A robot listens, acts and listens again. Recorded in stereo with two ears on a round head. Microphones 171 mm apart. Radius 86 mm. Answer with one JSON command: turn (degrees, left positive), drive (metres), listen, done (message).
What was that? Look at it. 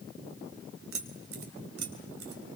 {"turn": -90}
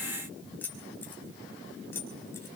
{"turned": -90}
{"turn": 10}
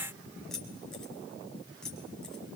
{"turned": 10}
{"done": "Found it: keys jangling, straight ahead."}